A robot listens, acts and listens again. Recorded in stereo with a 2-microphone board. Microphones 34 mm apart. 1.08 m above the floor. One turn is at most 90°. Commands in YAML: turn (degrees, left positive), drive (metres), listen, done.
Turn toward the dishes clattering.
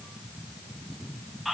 listen: true
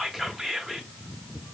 listen: true
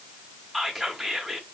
done: "I can't make out dishes clattering to turn to."